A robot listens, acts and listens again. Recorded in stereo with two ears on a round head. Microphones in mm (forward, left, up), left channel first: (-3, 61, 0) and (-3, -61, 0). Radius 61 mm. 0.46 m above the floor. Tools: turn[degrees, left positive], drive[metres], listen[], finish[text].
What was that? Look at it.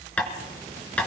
Action: turn[30]
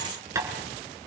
Thought: So it is at 20° right.
Action: turn[-20]
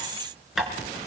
Action: finish[Found it: tapping, straight ahead, 2 to 4 m away.]